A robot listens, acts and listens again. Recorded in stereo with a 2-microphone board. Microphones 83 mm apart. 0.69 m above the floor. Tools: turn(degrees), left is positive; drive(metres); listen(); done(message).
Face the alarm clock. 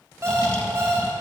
turn(degrees=-30)
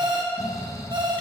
turn(degrees=-115)
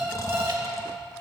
turn(degrees=-25)
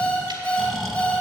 turn(degrees=15)
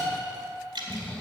done("Facing the alarm clock, 2 to 4 m away.")